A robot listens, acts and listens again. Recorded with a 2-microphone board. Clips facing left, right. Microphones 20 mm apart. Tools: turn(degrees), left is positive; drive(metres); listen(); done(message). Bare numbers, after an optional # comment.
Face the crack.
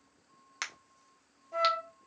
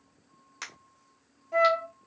# The crack: about 35° left or 145° left.
turn(35)
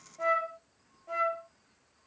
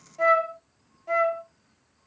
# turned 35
listen()
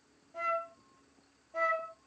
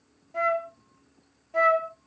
done("I heard a crack, but can't make it out now. It was about straight ahead or 110° left.")